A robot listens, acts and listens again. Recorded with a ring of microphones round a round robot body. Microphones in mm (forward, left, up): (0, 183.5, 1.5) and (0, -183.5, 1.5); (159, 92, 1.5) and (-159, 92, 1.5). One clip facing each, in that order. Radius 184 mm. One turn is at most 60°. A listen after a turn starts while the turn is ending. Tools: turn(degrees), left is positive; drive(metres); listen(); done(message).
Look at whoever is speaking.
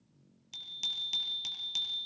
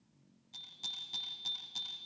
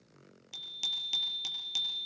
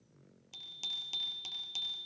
listen()
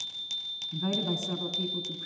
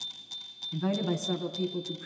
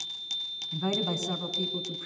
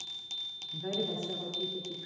done("Facing the woman speaking.")